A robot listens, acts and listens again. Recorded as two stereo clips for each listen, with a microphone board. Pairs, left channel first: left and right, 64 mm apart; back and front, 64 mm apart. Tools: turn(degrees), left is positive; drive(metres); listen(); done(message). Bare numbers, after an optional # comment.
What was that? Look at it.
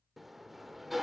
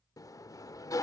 # The sliding door: straight behind.
turn(180)
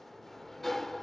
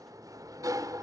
done("Facing the sliding door, under 1 m away.")